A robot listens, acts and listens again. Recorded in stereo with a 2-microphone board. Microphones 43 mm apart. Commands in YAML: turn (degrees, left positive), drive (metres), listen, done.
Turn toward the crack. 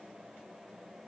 listen: true
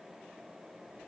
listen: true
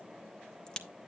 turn: 20
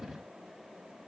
listen: true
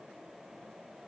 done: "I heard a crack, but can't make it out now. It was about straight ahead or 140° left."